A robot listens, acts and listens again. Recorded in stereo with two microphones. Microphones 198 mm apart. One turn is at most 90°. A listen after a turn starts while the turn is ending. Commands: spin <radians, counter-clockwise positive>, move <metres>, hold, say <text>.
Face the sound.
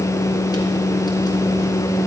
hold
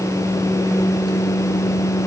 hold
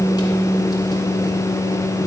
say I can't make out anything.